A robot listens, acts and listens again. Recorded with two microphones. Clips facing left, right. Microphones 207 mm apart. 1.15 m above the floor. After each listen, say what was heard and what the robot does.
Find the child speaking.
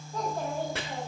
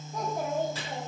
The child speaking: about 15° right or 165° right. Turn 15° right.
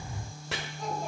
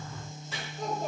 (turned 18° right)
So it is at 130° right. Turn 130° right.
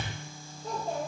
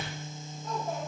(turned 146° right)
The child speaking is now 30° left. Turn 30° left.
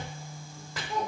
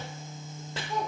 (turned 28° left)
The child speaking is now 10° left. Turn 10° left.
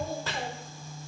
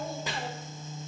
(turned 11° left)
Keep listening.
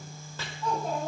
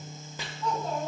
Found it: a child speaking, straight ahead, 2 to 4 m away.